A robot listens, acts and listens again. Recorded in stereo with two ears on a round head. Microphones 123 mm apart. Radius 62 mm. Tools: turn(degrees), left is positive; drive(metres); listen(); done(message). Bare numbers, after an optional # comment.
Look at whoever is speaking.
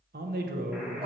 # The man speaking: about 70° right or 110° right.
turn(-70)
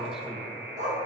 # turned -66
listen()
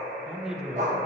done("Found it: a man speaking, straight ahead, 1 to 2 m away.")